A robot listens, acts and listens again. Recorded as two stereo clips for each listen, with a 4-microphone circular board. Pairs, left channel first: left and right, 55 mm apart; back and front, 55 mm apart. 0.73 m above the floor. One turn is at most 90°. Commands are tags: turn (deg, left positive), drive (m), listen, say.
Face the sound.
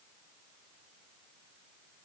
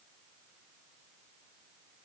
<listen/>
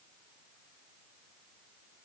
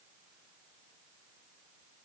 <listen/>
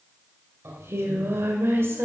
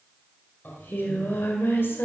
<turn deg="-90"/>
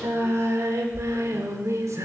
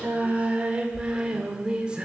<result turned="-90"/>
<turn deg="-70"/>
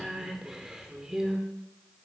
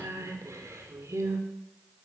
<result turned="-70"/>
<turn deg="-10"/>
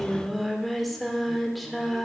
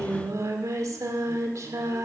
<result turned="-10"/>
<say>Found it: singing, straight ahead, 1 to 2 m away.</say>